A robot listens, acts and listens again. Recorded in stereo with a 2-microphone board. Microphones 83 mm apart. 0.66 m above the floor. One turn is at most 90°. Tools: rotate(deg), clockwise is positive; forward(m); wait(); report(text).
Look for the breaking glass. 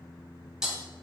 rotate(30)
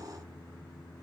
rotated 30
wait()
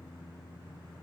report("I heard breaking glass, but can't make it out now. It was about 25° left or 145° right.")